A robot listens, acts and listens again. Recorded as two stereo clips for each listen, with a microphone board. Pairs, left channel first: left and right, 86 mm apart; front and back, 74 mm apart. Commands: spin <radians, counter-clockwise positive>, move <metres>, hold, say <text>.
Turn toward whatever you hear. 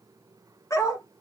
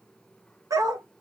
spin 2.44
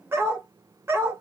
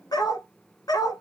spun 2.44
spin -0.52
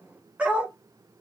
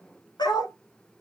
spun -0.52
spin -0.26
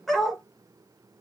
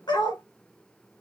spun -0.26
say Facing the dog barking, 1 to 2 m away.